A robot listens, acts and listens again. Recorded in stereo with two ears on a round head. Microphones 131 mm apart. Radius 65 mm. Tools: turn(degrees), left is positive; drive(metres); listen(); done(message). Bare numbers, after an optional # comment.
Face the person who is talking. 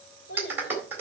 # The child speaking: about 75° left or 105° left.
turn(75)
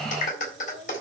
done("Found it: a child speaking, straight ahead, 2 to 4 m away.")